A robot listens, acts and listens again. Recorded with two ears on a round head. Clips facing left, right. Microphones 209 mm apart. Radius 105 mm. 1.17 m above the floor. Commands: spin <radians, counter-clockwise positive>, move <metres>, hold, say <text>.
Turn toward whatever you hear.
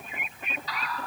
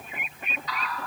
spin 0.44
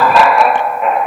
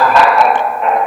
say Found it: laughter, straight ahead, 1 to 2 m away.